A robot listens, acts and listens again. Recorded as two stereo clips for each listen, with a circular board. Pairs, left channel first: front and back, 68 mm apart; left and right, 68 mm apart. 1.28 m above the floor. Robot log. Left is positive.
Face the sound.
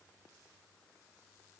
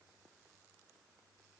cmd idle
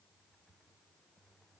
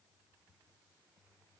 cmd idle
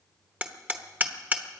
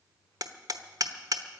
note: The hammering: 115° right.
cmd yaw -115
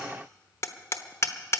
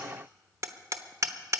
note: The hammering is now 50° right.
cmd yaw -50
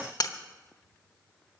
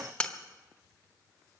note: The hammering is now 15° left.
cmd yaw +15
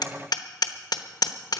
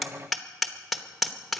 end: Facing the hammering.